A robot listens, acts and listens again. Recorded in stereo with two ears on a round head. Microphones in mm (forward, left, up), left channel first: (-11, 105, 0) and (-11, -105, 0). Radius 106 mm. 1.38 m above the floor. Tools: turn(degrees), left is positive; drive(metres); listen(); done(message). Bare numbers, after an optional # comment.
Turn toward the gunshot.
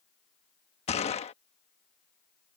# The gunshot: about 30° left or 150° left.
turn(30)
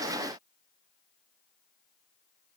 listen()
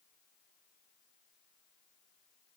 done("I heard a gunshot, but can't make it out now. It was about straight ahead or 120° left.")